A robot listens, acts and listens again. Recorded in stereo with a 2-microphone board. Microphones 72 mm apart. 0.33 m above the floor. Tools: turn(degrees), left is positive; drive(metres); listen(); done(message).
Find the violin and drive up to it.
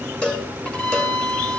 turn(degrees=15)
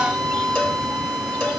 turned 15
drive(metres=1.0)
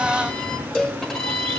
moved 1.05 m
turn(degrees=10)
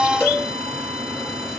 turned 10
listen()
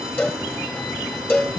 listen()
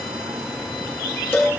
done("Facing where the violin came from. I can't hear it now. I did not reach it.")